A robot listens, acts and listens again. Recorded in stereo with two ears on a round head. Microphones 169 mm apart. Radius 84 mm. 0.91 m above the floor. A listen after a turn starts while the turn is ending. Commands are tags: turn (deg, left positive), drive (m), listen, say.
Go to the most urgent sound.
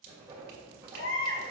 <turn deg="90"/>
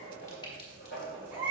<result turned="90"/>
<turn deg="-10"/>
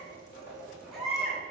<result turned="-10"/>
<drive m="1.0"/>
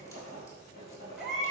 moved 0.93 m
<drive m="1.0"/>
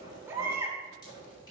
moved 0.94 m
<turn deg="-15"/>
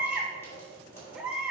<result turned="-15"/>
<drive m="1.0"/>
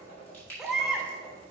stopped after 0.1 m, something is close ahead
<say>I am next to the baby crying.</say>